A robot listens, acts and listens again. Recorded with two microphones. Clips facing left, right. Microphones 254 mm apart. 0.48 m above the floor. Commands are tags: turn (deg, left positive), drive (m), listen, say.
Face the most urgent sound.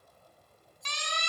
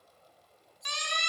<turn deg="-30"/>
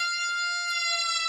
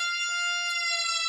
<turn deg="-145"/>
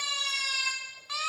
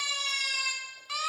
<turn deg="-35"/>
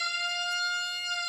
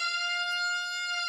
<turn deg="-15"/>
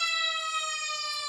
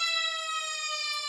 <say>Facing the siren, 2 to 4 m away.</say>